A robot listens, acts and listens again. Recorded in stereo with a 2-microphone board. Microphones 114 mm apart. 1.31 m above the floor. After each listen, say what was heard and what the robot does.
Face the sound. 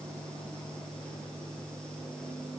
Keep listening.
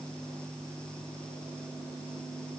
Keep listening.
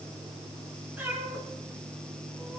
Turn 30° right.
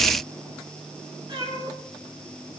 So it is at 135° right. Turn 135° right.
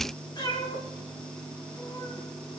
The cat meowing is now 40° left. Turn 40° left.
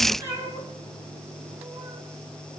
The cat meowing is now 25° right. Turn 25° right.
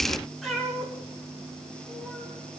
Found it: a cat meowing, straight ahead, over 4 m away.